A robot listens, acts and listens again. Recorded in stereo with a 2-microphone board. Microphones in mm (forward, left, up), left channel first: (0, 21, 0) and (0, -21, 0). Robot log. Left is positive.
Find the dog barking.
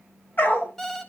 note: The dog barking: about 55° left or 125° left.
cmd yaw +55
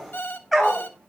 end: Facing the dog barking, 2 to 4 m away.